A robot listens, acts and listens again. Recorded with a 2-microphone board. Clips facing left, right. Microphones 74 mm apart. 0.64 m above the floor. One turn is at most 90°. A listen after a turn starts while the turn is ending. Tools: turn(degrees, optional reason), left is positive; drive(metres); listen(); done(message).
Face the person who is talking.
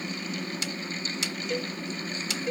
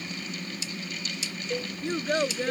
turn(degrees=-70, reason="The child speaking: about 70° right or 110° right.")
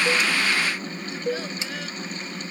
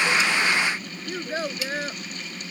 turn(degrees=-35, reason="So it is at 35° right.")
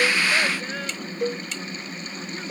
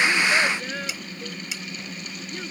listen()
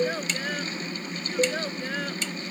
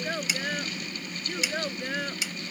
done("Found it: a child speaking, straight ahead.")